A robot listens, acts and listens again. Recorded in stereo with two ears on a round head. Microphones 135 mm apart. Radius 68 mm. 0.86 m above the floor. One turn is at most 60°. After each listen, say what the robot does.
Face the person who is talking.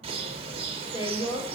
Turn 40° left.
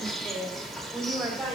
Facing the woman speaking, 2 to 4 m away.